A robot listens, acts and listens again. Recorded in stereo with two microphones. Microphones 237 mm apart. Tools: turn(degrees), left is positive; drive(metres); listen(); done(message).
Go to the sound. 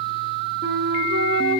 turn(degrees=-55)
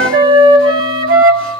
turn(degrees=-65)
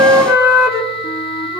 turn(degrees=-10)
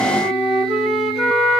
drive(metres=1.0)
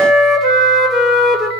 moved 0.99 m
drive(metres=1.0)
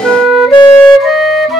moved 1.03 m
drive(metres=1.0)
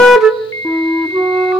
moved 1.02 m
drive(metres=1.0)
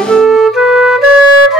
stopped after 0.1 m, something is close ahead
done("Arrived at the flute, straight ahead.")